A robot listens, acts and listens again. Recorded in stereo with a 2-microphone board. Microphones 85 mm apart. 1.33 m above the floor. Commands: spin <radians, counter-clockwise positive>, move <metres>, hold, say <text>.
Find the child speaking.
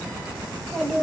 spin 0.52
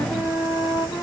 hold
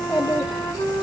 spin 2.18
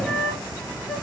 hold
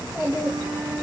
spin -0.52
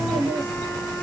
say Found it: a child speaking, straight ahead.